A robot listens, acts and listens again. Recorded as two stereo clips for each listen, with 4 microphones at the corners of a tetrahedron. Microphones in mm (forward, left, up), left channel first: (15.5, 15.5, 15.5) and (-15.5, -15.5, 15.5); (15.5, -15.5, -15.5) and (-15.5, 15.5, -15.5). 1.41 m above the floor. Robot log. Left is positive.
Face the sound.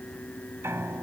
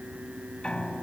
note: The piano: 115° right.
cmd yaw -115
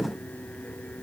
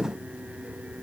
cmd idle
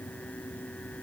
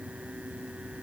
cmd idle
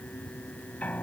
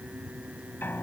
note: The piano is now 10° right.
cmd yaw -10
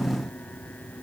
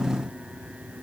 cmd idle
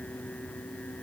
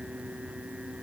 cmd idle
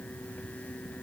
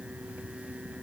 end: Facing where the piano came from. I can't hear it now.